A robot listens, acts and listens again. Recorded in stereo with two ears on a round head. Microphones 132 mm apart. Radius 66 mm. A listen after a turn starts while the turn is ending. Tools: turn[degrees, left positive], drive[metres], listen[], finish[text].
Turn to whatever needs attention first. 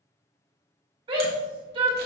Thought: The shout: about 40° right or 140° right.
Action: turn[-40]
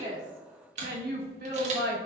Thought: So it is at 105° right.
Action: turn[-105]
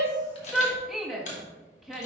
Action: finish[Facing the shout.]